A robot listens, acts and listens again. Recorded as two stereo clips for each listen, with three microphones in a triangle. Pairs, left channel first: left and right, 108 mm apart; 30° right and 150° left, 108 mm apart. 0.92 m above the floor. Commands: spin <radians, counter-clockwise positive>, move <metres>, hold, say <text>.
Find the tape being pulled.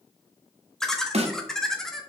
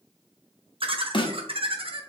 hold
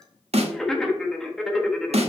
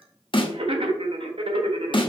hold
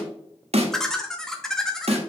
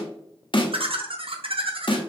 say I can't make out tape being pulled, only a snare drum and laughter.